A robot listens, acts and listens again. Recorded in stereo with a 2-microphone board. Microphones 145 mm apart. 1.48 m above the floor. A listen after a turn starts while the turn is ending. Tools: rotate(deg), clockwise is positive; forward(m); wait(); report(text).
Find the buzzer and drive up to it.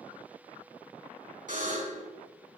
rotate(65)
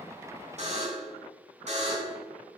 rotate(50)
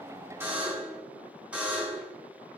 forward(1.0)
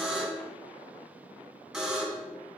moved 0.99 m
forward(1.0)
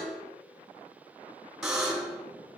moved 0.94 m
forward(1.0)
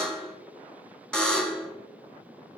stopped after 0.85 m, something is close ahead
report("Arrived at the buzzer, straight ahead.")